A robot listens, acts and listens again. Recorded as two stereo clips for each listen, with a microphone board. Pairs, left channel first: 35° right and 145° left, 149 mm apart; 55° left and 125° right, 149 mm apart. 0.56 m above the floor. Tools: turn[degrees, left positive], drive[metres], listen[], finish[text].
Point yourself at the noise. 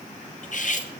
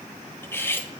Thought: The cutlery clinking: 15° right.
Action: turn[-15]
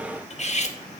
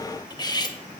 Action: finish[Facing the cutlery clinking.]